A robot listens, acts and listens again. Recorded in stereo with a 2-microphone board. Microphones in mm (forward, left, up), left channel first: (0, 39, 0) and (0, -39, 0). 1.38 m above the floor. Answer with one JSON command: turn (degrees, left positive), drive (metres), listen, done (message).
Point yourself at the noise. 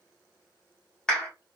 {"turn": 30}
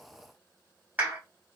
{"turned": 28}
{"turn": -20}
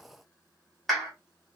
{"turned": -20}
{"done": "Facing the clap, 1 to 2 m away."}